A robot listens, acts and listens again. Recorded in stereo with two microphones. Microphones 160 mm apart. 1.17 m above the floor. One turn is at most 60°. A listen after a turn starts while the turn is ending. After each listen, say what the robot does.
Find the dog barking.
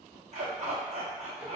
Turn 45° right.
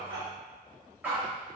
Turn 15° right.
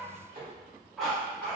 Found it: a dog barking, straight ahead, under 1 m away.